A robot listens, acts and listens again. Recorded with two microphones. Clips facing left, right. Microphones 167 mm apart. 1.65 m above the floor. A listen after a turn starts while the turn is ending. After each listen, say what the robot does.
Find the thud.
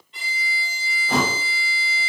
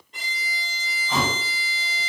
Turn 65° left.
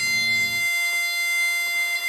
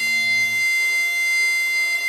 Keep listening.
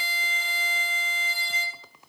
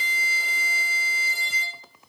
I heard a thud, but can't make it out now. It was about straight ahead or 50° left.